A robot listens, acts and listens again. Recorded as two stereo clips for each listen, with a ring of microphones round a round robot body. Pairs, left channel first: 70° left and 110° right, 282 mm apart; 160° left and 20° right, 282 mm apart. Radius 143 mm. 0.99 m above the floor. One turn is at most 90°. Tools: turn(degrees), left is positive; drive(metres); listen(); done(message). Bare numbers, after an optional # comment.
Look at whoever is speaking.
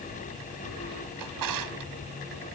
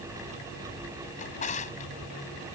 listen()
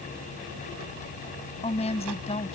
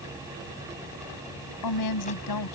# The woman speaking: 135° left.
turn(90)
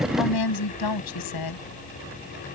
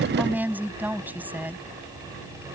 # The woman speaking is now 60° left.
turn(60)
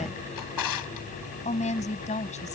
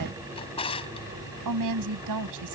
done("Found it: a woman speaking, straight ahead.")